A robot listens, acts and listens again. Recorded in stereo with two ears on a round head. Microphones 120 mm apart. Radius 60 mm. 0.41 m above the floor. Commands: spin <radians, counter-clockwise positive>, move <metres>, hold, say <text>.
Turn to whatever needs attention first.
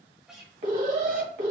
spin -1.05
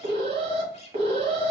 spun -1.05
spin -0.87
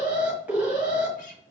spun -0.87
spin -0.17
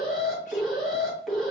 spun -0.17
say Facing the alarm, 1 to 2 m away.